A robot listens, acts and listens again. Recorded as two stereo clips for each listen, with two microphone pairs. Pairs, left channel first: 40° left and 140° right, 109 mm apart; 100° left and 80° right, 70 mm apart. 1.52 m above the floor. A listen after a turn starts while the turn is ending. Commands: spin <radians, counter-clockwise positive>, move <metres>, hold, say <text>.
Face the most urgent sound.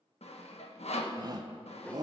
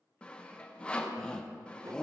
spin 3.05
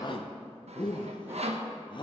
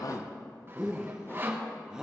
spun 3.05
say Found it: a shout, straight ahead.